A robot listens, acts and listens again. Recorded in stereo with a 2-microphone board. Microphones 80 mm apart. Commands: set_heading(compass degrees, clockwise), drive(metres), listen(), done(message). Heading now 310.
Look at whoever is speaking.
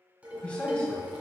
set_heading(295)
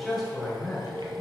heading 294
done("Facing the man speaking, 2 to 4 m away.")